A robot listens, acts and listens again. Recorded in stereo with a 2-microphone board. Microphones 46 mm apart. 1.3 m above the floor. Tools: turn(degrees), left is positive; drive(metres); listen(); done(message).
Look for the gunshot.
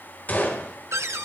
turn(degrees=40)
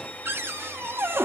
listen()
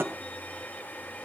done("I heard a gunshot, but can't make it out now. It was about straight ahead or 100° left.")